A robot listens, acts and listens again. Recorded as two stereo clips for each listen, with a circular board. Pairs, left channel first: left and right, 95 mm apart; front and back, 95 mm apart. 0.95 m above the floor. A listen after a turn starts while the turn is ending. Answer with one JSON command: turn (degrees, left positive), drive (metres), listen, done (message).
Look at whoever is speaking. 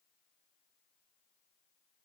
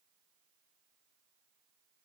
{"listen": true}
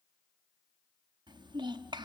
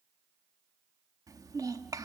{"turn": -130}
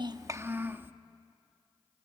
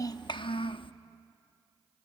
{"turn": -20}
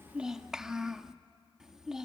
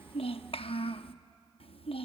{"done": "Found it: a child speaking, straight ahead, under 1 m away."}